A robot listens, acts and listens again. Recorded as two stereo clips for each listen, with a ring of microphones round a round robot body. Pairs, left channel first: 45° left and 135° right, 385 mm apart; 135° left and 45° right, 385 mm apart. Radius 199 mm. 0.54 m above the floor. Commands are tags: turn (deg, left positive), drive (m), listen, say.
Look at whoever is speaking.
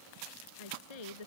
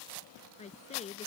<turn deg="60"/>
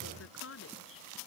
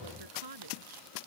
<turn deg="-15"/>
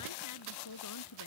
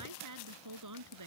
<say>Found it: a woman speaking, straight ahead.</say>